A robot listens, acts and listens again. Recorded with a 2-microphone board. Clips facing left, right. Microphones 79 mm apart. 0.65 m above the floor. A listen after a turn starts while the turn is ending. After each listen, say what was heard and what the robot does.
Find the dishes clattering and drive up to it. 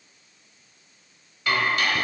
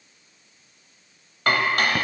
The dishes clattering: about 55° right or 125° right. Turn 55° right.
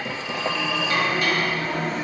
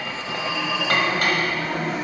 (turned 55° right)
Keep listening.
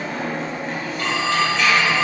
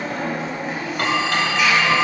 Keep listening.
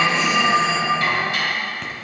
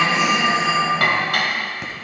So it is at 65° right. Turn 65° right.
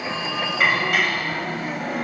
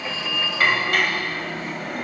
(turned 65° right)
Drive 1.0 m forward.
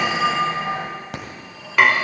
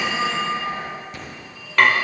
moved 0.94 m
Drive 1.0 m forward.
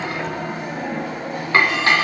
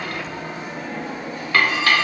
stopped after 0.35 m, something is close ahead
The dishes clattering is now 25° left. Turn 25° left.
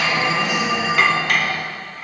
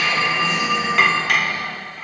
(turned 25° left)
I am next to the dishes clattering.